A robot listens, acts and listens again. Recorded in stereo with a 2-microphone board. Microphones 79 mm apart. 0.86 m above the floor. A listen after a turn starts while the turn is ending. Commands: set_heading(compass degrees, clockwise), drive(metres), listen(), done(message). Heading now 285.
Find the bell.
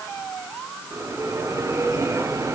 set_heading(325)
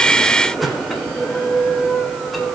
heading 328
done("Facing the bell, 2 to 4 m away.")